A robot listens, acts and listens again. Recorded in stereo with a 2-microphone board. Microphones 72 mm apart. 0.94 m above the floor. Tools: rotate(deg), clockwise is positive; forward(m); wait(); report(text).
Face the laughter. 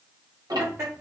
rotate(35)
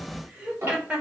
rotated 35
rotate(20)
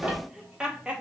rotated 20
rotate(15)
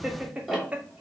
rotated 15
rotate(20)
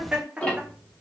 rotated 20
rotate(15)
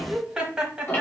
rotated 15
rotate(10)
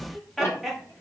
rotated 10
report("Found it: laughter, straight ahead, 1 to 2 m away.")